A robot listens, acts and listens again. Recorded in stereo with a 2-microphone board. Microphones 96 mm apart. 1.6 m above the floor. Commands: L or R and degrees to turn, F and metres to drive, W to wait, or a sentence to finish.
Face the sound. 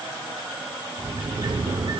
R55
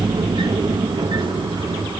R65
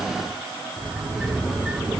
Found it: a sliding door, straight ahead, 1 to 2 m away.